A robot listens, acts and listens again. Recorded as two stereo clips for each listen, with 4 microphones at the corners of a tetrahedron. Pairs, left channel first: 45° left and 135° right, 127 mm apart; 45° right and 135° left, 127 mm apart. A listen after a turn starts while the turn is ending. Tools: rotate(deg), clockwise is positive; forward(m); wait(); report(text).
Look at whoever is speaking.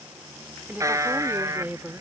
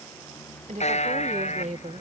rotate(-150)
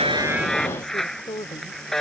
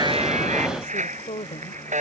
rotate(10)
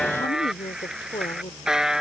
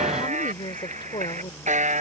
report("Found it: a woman speaking, straight ahead.")